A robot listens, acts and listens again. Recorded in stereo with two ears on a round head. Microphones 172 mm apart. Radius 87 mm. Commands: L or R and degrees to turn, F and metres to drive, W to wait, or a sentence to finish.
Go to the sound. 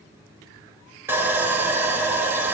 R30
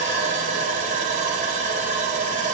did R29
R140
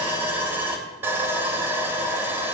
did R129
R10
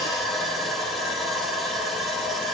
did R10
F1.0
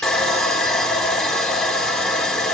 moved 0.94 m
F1.0
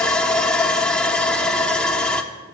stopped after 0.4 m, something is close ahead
I am next to the sawing.